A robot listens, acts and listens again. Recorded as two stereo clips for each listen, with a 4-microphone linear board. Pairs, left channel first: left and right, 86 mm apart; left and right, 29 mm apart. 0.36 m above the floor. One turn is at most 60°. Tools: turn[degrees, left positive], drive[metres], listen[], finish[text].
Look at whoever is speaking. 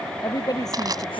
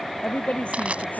Thought: The woman speaking: about 50° left or 130° left.
Action: turn[50]
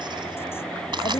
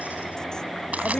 Action: listen[]
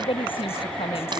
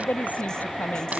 Thought: So it is at 85° left.
Action: turn[60]
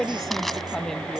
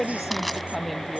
Action: finish[Facing the woman speaking.]